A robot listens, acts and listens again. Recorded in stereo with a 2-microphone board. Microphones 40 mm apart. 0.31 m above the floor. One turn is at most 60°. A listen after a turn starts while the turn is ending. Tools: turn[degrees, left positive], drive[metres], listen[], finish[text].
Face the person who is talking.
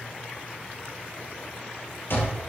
Action: listen[]
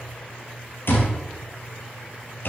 Action: listen[]
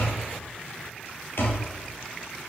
Action: finish[I can't make out anyone speaking, only an alarm clock.]